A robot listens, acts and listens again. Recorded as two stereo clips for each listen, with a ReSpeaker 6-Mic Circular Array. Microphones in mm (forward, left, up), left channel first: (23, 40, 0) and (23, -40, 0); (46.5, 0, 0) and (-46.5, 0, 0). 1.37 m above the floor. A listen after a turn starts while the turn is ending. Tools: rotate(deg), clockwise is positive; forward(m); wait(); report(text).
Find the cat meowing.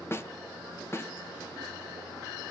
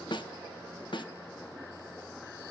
wait()
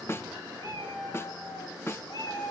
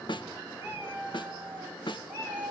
rotate(-115)
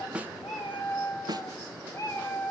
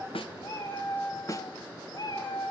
rotate(-30)
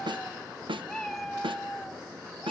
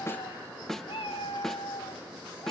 report("Found it: a cat meowing, straight ahead.")